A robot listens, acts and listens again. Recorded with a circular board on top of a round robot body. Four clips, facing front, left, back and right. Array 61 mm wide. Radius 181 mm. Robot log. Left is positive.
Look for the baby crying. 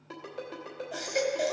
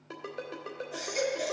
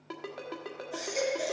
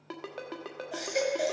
note: The baby crying: 45° right.
cmd yaw -45
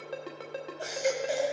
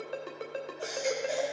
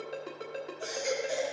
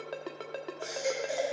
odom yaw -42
end: Found it: a baby crying, straight ahead.